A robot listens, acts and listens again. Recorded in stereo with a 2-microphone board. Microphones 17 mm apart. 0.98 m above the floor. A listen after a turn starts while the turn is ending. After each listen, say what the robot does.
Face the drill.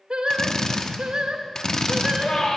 Turn 30° left.
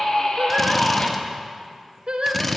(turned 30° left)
Found it: a drill, straight ahead.